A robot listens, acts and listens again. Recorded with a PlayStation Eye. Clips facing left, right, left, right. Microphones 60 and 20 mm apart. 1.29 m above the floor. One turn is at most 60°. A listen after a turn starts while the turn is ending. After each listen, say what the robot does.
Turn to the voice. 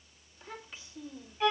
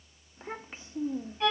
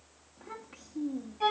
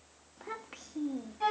Turn 35° right.
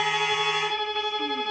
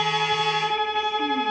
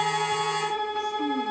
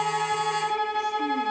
Keep listening.
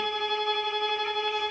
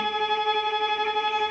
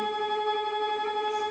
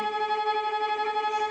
Keep listening.
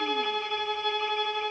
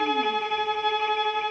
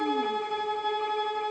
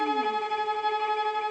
I heard a child speaking, but can't make it out now. It was about straight ahead or 110° right.